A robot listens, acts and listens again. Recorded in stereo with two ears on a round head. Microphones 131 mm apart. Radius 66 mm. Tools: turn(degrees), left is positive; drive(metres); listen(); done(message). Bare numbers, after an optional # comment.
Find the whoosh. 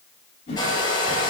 # The whoosh: about 45° left or 135° left.
turn(45)
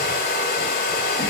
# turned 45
listen()
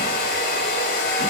listen()
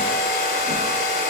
done("I heard a whoosh, but can't make it out now. It was about straight ahead or 90° left.")